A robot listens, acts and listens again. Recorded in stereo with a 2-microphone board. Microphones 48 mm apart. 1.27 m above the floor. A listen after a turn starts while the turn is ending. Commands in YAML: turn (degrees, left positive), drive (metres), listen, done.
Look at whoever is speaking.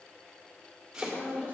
turn: 45
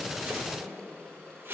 listen: true
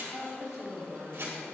turn: 100
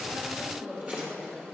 done: "Found it: a woman speaking, straight ahead, over 4 m away."